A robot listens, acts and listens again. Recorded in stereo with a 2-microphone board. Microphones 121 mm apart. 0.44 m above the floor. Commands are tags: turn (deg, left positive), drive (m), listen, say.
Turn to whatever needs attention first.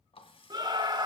<turn deg="-35"/>
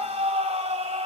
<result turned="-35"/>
<turn deg="-105"/>
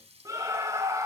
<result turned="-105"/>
<turn deg="-30"/>
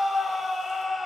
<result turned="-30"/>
<say>Facing the scream, 1 to 2 m away.</say>